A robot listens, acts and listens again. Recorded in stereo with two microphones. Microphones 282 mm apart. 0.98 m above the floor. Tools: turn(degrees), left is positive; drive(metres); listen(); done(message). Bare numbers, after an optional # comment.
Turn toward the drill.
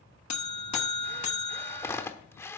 turn(30)
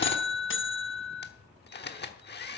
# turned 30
# So it is at 140° left.
turn(140)
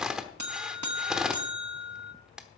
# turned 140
done("Facing the drill, 1 to 2 m away.")